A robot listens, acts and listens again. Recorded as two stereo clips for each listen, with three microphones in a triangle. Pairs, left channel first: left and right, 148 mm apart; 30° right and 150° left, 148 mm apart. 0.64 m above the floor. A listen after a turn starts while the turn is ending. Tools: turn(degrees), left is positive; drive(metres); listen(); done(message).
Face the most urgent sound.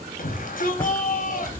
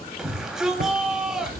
turn(degrees=65)
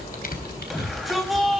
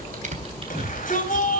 done("Found it: a shout, straight ahead.")